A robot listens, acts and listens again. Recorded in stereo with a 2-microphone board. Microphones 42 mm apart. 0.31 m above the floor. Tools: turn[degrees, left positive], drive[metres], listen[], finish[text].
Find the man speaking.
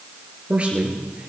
Thought: The man speaking: about 30° right or 150° right.
Action: turn[-30]
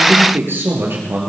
Thought: So it is at 115° right.
Action: turn[-115]
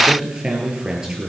Thought: The man speaking is now 15° right.
Action: turn[-15]
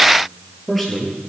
Action: finish[Found it: a man speaking, straight ahead, over 4 m away.]